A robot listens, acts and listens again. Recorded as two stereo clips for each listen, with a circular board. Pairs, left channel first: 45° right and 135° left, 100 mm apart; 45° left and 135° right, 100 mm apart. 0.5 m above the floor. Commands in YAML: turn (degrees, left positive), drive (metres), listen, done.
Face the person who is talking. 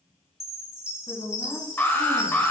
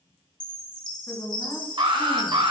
turn: -25
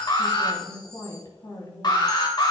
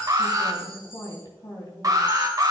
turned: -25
done: "Facing the woman speaking."